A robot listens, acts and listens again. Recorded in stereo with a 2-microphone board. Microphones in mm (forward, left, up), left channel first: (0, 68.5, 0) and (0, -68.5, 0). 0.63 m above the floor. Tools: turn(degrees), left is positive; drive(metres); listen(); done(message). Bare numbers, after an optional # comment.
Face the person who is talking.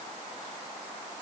listen()
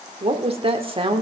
# The woman speaking: about 40° right or 140° right.
turn(-40)
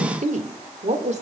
# So it is at 120° right.
turn(-120)
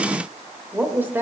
# The woman speaking is now 15° right.
turn(-15)
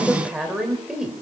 done("Found it: a woman speaking, straight ahead, 2 to 4 m away.")